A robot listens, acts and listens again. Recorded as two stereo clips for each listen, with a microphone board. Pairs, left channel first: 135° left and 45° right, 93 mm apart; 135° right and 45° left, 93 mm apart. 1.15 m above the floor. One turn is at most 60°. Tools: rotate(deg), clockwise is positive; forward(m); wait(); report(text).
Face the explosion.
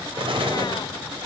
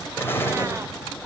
rotate(60)
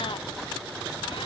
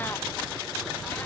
rotate(10)
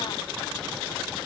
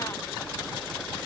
report("Facing where the explosion came from. I can't hear it now.")